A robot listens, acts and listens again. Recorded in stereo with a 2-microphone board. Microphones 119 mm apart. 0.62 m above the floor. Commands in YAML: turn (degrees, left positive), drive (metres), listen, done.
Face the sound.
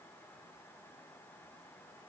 listen: true
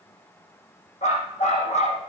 turn: 75
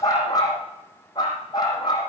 turn: 35
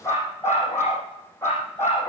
turn: 20
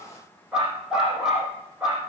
done: "Facing the dog barking."